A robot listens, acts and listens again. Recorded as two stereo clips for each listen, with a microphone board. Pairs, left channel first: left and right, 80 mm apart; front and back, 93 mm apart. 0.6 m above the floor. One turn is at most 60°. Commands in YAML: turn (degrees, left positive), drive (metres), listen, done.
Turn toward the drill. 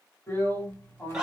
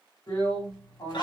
turn: 30
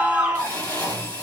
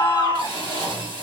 turn: 20
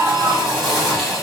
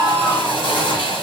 done: "Facing the drill."